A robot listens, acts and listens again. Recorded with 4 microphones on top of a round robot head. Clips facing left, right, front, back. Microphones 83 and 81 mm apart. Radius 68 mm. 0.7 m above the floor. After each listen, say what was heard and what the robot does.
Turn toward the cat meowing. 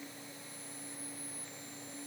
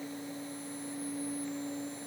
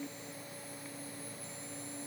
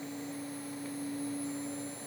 Keep listening.
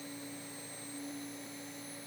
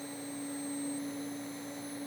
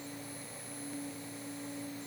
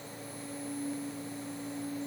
Keep listening.
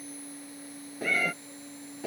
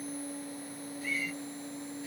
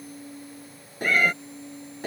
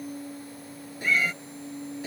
The cat meowing: 40° left. Turn 40° left.
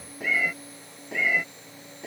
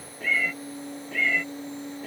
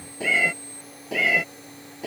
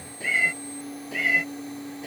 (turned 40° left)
The cat meowing is now 10° left. Turn 10° left.
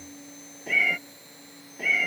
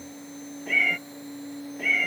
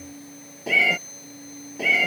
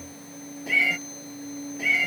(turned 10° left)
Facing the cat meowing.